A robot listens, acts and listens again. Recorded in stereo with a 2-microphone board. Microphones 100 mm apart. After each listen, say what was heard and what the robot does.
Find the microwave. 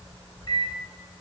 The microwave: about 50° left or 130° left. Turn 50° left.
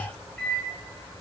So it is at 10° left. Turn 10° left.
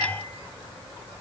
Keep listening.
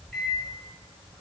Found it: a microwave, straight ahead.